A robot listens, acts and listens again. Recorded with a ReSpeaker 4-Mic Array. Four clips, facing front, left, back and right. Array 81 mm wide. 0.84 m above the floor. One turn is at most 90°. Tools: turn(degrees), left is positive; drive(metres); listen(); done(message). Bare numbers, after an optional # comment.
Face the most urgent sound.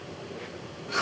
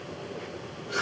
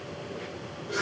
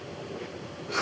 listen()
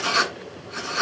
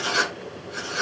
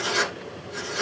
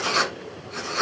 listen()
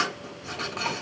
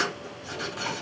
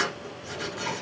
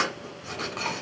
done("I can't make out anything urgent, only writing.")